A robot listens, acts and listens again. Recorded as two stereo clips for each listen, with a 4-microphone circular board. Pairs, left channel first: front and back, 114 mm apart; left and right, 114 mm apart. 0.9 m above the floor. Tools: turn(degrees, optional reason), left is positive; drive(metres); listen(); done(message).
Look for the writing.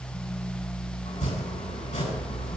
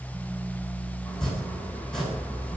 listen()
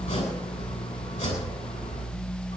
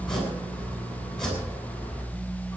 listen()
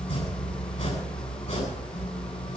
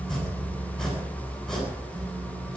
done("I can't make out writing to turn to.")